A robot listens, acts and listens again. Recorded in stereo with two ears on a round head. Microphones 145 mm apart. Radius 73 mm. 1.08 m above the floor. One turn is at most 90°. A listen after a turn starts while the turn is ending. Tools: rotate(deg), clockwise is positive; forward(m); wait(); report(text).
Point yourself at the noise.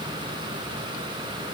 wait()
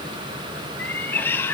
rotate(-30)
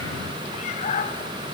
rotate(-90)
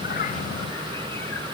rotate(-45)
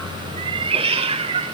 rotate(35)
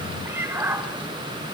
rotate(15)
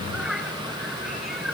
report("Found it: a cat meowing, straight ahead, 1 to 2 m away.")